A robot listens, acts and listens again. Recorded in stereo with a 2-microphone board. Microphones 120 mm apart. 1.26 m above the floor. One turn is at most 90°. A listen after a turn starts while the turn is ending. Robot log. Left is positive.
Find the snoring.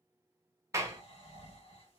note: The snoring: about 50° left or 130° left.
cmd yaw +50
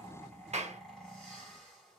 end: Found it: snoring, straight ahead.